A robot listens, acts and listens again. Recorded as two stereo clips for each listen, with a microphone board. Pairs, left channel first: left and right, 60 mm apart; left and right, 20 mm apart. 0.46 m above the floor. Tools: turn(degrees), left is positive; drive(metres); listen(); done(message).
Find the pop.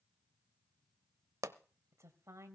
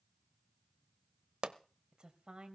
turn(degrees=-70)
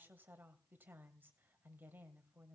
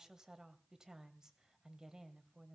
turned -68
listen()
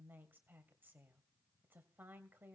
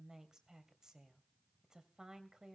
done("I heard a pop, but can't make it out now. It was about straight ahead or 45° right.")